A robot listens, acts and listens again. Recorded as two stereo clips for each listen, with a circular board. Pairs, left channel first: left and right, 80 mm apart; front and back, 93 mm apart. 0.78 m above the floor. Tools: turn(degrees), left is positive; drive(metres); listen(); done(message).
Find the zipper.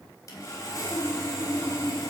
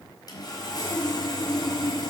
listen()
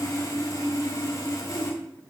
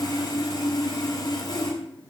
listen()
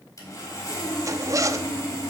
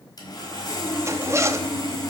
turn(degrees=-125)
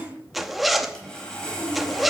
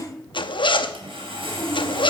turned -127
done("Facing the zipper.")